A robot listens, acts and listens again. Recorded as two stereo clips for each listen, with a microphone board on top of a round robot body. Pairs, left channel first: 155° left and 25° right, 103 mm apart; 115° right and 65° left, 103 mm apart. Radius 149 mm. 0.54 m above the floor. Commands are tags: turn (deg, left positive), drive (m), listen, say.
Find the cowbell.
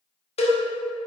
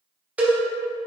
<turn deg="145"/>
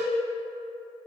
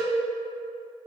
<listen/>
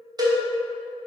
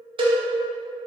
<turn deg="30"/>
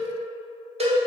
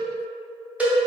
<turn deg="-10"/>
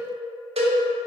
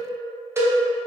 <say>Facing the cowbell, 1 to 2 m away.</say>